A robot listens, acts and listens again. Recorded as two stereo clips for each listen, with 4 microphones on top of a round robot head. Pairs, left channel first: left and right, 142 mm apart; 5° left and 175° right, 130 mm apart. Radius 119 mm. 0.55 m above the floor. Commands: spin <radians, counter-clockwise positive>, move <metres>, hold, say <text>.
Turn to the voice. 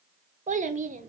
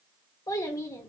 spin -1.13
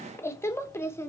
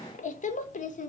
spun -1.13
spin 0.35
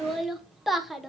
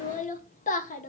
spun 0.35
say Facing the child speaking, 1 to 2 m away.